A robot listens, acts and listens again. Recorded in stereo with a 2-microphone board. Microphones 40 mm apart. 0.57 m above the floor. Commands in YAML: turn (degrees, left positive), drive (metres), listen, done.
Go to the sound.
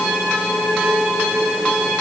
listen: true
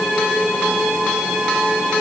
listen: true
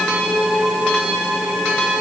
done: "I can't make out anything."